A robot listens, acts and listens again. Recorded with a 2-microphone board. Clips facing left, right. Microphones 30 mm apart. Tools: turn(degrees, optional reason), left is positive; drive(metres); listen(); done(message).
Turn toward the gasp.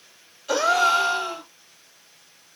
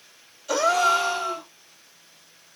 turn(degrees=30, reason="The gasp: about 30° left or 150° left.")
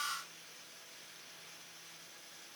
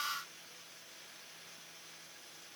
listen()
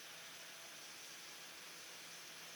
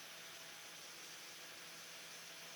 done("I heard a gasp, but can't make it out now. It was about straight ahead or 120° left.")